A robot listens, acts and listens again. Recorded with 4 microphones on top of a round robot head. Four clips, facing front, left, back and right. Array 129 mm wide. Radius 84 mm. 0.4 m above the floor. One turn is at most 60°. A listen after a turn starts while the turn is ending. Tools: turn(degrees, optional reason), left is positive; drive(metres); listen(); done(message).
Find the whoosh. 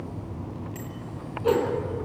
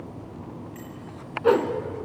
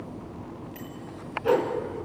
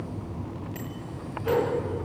turn(degrees=60, reason="The whoosh: 70° left.")
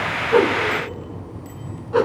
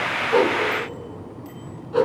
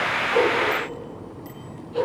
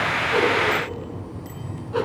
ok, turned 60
done("Found it: a whoosh, straight ahead.")